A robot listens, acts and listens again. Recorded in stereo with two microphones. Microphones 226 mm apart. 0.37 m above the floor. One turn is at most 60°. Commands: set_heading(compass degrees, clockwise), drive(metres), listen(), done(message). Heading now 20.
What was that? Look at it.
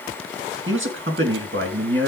set_heading(80)
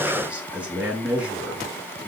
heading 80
done("Facing the man speaking, over 4 m away.")